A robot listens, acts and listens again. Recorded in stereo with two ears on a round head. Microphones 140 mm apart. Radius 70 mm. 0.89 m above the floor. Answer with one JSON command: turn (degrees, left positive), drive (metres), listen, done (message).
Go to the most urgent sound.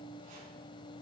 {"listen": true}
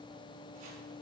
{"listen": true}
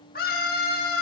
{"turn": 65}
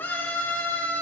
{"turn": 15}
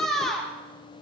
{"drive": 1.0}
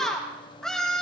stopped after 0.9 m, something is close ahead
{"done": "I am next to the scream."}